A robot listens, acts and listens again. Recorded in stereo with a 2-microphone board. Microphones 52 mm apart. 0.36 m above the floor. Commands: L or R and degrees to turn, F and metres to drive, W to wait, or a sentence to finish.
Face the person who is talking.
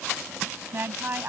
R40
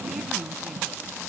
W
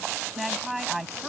Found it: a woman speaking, straight ahead.